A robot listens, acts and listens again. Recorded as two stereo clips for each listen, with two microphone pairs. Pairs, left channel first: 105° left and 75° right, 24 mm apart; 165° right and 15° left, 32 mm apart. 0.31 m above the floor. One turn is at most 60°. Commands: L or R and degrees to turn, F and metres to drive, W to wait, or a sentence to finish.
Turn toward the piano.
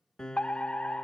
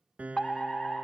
L55
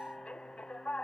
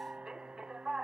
W
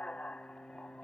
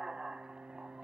Found it: a piano, straight ahead.